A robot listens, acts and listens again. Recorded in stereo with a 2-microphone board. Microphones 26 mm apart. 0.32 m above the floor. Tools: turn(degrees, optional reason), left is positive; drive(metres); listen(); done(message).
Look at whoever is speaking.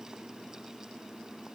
listen()
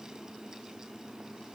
listen()
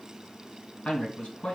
turn(degrees=50, reason="The man speaking: about 50° left or 130° left.")
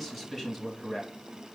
turn(degrees=15, reason="So it is at 15° left.")
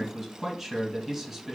turn(degrees=-10, reason="The man speaking is now 10° right.")
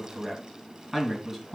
done("Found it: a man speaking, straight ahead, 2 to 4 m away.")